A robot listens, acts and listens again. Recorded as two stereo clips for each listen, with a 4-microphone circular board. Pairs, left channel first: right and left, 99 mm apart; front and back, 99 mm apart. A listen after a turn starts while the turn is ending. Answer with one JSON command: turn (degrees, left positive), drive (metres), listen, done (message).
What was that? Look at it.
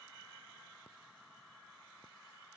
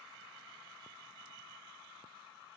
{"listen": true}
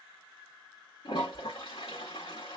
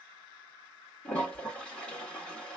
{"turn": -75}
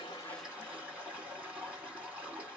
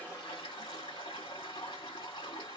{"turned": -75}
{"turn": 15}
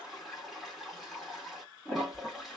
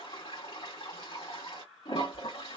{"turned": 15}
{"done": "Found it: a toilet flushing, straight ahead."}